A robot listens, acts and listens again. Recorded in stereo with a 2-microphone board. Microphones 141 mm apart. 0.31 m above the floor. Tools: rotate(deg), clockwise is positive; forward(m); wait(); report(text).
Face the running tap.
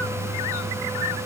wait()
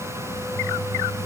wait()
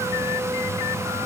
report("I can't make out a running tap to turn to.")